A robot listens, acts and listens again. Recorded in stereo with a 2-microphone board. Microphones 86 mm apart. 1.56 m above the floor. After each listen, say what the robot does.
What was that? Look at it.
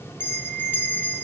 Turn 25° left.
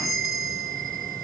Facing the bell.